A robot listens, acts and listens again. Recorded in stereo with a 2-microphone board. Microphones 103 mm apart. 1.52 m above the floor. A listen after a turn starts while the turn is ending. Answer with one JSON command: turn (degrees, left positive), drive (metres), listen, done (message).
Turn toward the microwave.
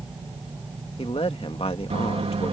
{"turn": -75}
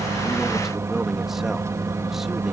{"turn": -30}
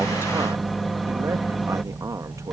{"done": "Facing the microwave."}